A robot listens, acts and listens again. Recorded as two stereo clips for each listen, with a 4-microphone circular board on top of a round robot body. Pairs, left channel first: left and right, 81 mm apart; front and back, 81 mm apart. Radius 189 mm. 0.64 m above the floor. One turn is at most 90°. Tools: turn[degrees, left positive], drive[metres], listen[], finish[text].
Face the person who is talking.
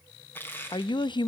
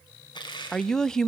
Thought: The woman speaking: 85° left.
Action: turn[85]
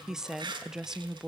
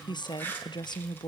Action: finish[Facing the woman speaking.]